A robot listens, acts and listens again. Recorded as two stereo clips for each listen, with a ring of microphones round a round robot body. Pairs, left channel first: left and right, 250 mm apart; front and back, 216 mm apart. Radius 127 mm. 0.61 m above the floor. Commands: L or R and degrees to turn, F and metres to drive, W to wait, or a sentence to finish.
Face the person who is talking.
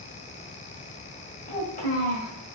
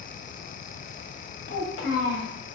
L30
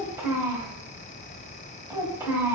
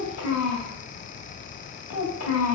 R10
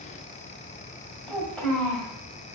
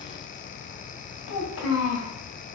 Facing the child speaking, 1 to 2 m away.